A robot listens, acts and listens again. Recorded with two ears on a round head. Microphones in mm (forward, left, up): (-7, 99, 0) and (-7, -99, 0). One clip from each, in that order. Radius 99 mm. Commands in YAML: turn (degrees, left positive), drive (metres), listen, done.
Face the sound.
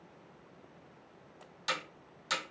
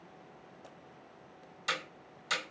turn: 30
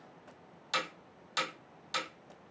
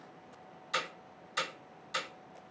turn: 140
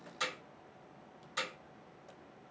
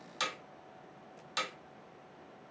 turn: -40
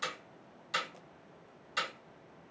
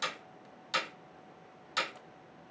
turn: -20
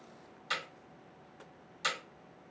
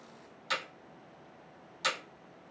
turn: -10
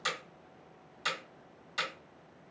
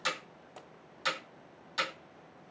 done: "Found it: hammering, straight ahead."